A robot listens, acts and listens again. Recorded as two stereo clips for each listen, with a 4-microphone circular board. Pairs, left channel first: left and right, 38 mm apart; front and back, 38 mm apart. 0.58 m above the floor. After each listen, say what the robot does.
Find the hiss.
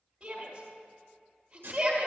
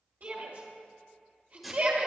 Turn 95° right.
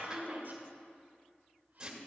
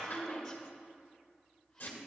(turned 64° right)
Turn 30° right.
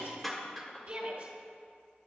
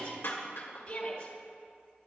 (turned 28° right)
Facing the hiss, 1 to 2 m away.